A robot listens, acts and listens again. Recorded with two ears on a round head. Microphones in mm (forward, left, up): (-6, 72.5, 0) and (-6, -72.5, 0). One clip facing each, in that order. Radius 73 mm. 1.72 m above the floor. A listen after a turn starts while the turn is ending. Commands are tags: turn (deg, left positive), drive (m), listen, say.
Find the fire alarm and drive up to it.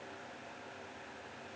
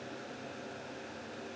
<listen/>
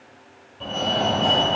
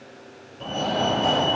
<turn deg="-30"/>
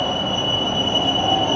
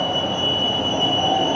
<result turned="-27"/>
<turn deg="-150"/>
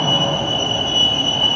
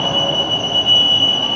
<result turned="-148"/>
<drive m="1.0"/>
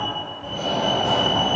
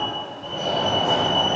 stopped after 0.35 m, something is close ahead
<say>Something is in my way. I am facing the fire alarm but have not reached it.</say>